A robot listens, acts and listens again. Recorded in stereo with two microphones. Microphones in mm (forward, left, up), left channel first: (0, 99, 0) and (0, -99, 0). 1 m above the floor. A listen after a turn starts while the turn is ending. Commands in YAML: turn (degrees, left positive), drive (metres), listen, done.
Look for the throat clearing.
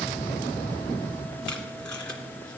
listen: true
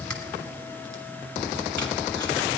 listen: true
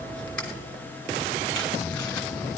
done: "I can't make out throat clearing."